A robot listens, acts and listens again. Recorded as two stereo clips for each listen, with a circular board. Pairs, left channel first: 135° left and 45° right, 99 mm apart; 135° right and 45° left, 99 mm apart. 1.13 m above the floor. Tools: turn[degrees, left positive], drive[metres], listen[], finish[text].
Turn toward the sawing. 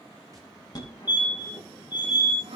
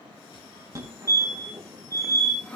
Thought: The sawing: 65° right.
Action: turn[-65]
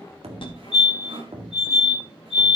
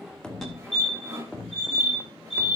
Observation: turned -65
Action: listen[]
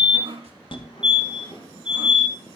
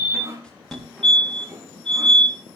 Thought: The sawing is now 20° right.
Action: turn[-20]
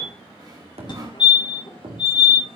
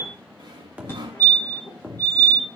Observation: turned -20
Action: finish[Found it: sawing, straight ahead, 2 to 4 m away.]